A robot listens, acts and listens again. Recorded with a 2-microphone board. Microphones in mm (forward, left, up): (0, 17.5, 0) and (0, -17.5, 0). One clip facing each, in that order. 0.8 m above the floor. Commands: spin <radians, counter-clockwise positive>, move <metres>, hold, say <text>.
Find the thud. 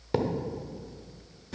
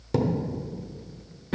spin 0.35
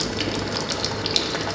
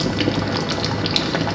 hold
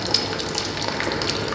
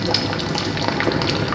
say I heard a thud, but can't make it out now. It was about straight ahead or 140° left.